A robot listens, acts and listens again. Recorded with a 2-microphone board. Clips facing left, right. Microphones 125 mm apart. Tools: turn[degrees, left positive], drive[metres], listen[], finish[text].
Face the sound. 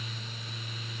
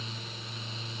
Action: listen[]
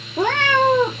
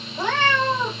Thought: The cat meowing: about 65° left or 115° left.
Action: turn[65]
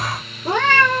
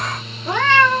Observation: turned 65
Thought: So it is at 45° left.
Action: turn[45]
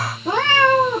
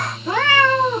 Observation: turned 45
Thought: The cat meowing is now 35° left.
Action: turn[35]
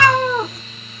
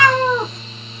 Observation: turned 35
Action: finish[Facing the cat meowing, 1 to 2 m away.]